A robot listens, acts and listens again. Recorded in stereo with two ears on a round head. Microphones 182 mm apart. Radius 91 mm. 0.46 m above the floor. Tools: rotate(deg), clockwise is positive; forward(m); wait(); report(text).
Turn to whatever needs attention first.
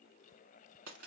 wait()
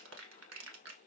wait()
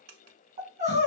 rotate(40)
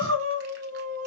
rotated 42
rotate(95)
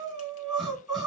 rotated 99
report("Found it: crying, straight ahead.")